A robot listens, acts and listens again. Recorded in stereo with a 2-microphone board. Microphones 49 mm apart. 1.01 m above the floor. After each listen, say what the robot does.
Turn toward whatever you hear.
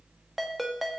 Turn 30° left.
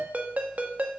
Turn 30° right.
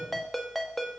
Facing the ringtone, under 1 m away.